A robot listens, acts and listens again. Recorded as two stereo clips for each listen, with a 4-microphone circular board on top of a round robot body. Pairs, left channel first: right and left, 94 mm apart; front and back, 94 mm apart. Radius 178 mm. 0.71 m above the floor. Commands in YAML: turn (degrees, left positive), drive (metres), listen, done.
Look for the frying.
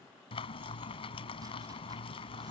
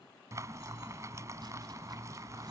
turn: -120
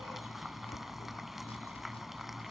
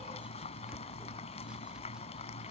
done: "Found it: frying, straight ahead."